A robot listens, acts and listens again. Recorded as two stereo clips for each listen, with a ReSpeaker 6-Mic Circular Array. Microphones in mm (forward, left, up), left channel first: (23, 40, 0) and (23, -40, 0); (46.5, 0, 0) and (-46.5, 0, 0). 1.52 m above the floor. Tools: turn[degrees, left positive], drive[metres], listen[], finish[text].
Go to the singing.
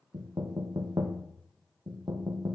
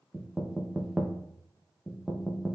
Action: listen[]
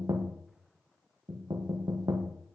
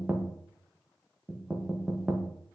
Action: listen[]
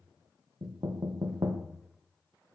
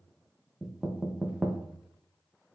Action: finish[I can't make out singing, only knocking.]